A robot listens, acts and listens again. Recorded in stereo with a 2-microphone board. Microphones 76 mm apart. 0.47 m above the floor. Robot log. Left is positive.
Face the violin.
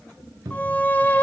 note: The violin: about 25° left or 155° left.
cmd yaw +25
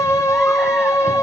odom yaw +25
note: So it is at 130° left.
cmd yaw +130
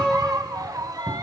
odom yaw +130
end: Found it: a violin, straight ahead.